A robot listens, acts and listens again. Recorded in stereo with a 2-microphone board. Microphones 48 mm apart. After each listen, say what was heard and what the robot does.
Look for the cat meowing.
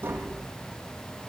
Keep listening.
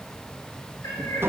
Turn 90° left.
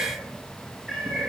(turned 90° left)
Found it: a cat meowing, straight ahead.